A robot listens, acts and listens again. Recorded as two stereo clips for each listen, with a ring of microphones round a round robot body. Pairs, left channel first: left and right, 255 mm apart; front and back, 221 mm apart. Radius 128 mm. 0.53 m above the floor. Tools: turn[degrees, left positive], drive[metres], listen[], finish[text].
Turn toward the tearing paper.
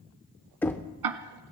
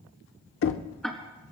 Action: listen[]
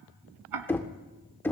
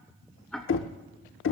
Action: listen[]
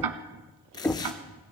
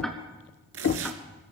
Thought: The tearing paper: 165° left.
Action: turn[165]
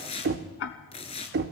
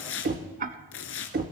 Thought: The tearing paper is now 20° left.
Action: turn[20]
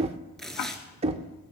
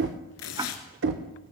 Action: finish[Facing the tearing paper, 1 to 2 m away.]